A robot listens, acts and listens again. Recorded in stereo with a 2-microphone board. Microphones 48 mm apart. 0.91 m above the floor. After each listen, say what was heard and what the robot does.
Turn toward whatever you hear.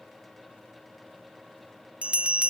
The bell: about 25° right or 155° right. Turn 25° right.
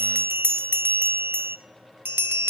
So it is at 125° right. Turn 125° right.
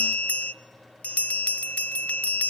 The bell is now 30° left. Turn 30° left.
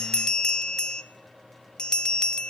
The bell is now 15° left. Turn 15° left.
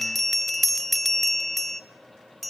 Facing the bell.